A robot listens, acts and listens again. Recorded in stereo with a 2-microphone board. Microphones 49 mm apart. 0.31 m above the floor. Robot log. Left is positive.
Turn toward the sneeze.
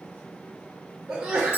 note: The sneeze: about 15° right or 165° right.
cmd yaw -15
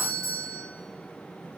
cmd idle
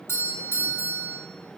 end: I heard a sneeze, but can't make it out now. It was about straight ahead or 150° right.